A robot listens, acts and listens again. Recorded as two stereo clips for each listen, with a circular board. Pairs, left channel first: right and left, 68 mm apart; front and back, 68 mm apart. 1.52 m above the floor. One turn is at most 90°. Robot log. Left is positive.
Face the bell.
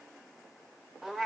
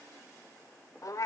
cmd idle
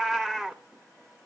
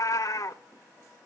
cmd idle
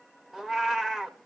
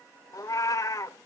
end: I can't make out a bell to turn to.